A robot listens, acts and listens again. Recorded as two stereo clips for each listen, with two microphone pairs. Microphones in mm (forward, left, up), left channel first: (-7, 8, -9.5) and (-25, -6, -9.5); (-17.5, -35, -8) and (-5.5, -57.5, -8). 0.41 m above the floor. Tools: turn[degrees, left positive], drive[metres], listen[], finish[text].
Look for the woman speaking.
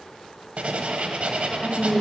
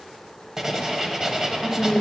Thought: The woman speaking: 35° left.
Action: turn[35]
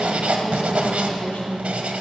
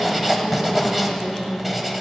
Thought: The woman speaking is now 20° left.
Action: turn[20]
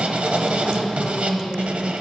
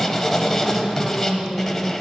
Action: finish[Facing the woman speaking, 2 to 4 m away.]